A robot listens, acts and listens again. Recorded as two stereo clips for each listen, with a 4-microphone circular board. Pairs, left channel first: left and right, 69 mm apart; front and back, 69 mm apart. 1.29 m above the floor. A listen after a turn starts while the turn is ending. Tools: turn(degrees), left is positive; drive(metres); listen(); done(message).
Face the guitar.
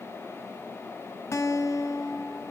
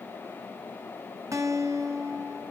turn(degrees=140)
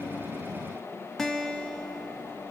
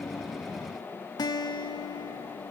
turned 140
done("Facing the guitar, under 1 m away.")